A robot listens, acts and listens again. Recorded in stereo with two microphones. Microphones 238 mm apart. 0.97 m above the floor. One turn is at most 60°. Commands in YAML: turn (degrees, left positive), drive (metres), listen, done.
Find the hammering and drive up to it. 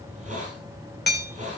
turn: 45
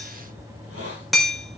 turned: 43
drive: 1.0
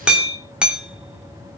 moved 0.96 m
drive: 1.0
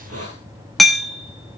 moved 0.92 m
drive: 1.0
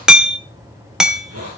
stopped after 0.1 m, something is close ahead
done: "Arrived at the hammering, straight ahead."